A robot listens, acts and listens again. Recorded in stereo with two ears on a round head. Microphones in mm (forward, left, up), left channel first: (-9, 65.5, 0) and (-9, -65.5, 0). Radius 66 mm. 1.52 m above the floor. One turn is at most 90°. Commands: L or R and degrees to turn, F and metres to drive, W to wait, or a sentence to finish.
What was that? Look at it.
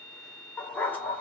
L30
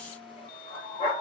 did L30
L90
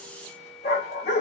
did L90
L45
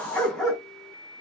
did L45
Found it: a dog barking, straight ahead, over 4 m away.